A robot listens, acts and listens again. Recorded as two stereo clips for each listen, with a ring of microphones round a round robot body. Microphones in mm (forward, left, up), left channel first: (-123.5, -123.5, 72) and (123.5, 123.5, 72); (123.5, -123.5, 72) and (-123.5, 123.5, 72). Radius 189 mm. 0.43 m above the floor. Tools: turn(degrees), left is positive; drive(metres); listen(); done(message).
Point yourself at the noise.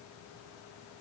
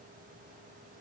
listen()
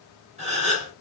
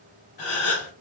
turn(degrees=-25)
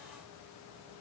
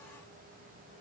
done("Facing where the gasp came from. I can't hear it now.")